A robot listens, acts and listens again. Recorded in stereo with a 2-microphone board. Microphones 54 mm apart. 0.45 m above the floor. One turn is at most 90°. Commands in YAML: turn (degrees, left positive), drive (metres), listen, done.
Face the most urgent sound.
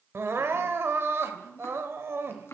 turn: -50
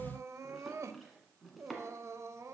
turn: -75
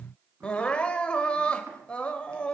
turn: 20
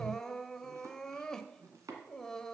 turn: 10
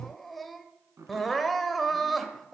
done: "Facing the crying."